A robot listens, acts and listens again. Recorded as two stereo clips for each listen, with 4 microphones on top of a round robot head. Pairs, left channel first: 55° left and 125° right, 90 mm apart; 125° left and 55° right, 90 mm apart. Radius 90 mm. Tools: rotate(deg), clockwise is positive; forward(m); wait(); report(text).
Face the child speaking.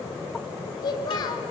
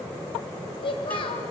rotate(-100)
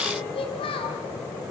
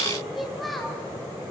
rotate(-40)
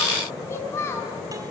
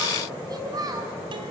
report("Found it: a child speaking, straight ahead, over 4 m away.")